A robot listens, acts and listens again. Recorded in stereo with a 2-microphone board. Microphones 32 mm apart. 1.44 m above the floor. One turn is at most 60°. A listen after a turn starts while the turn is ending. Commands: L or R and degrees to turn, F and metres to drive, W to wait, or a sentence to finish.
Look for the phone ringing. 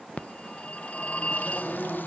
L45
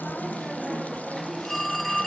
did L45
Found it: a phone ringing, straight ahead.